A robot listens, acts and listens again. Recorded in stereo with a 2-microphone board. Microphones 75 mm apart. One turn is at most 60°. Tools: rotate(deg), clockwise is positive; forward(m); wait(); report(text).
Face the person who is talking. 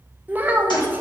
rotate(20)
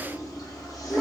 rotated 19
wait()
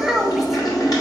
report("Found it: a child speaking, straight ahead, under 1 m away.")